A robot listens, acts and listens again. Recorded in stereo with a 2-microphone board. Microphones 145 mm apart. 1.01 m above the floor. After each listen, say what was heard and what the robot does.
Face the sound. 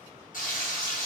The frying: about 70° left or 110° left. Turn 70° left.
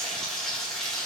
Found it: frying, straight ahead.